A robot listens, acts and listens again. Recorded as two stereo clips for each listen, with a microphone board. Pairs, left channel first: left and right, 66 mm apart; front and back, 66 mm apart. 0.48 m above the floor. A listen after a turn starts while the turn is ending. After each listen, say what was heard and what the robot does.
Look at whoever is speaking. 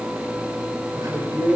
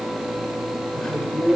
The man speaking: 80° right. Turn 80° right.
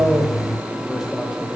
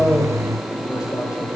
Keep listening.
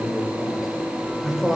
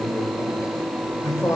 Found it: a man speaking, straight ahead.